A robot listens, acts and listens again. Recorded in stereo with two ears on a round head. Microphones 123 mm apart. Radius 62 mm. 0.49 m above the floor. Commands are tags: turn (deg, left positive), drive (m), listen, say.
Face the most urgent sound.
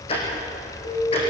<turn deg="50"/>
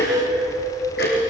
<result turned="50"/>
<say>Facing the alarm.</say>